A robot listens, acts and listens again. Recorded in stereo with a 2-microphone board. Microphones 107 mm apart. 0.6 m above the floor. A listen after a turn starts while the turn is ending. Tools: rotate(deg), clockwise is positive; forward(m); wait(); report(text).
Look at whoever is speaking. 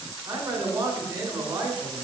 rotate(30)
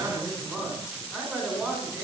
report("Facing the man speaking, 2 to 4 m away.")